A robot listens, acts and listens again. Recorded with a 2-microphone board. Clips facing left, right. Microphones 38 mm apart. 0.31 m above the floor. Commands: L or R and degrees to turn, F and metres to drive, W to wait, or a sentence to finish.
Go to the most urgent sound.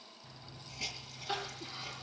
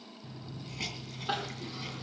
R55
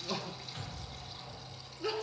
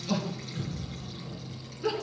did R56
F1.0
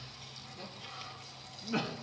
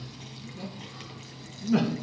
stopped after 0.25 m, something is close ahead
Something is in my way. I am facing the crying but have not reached it.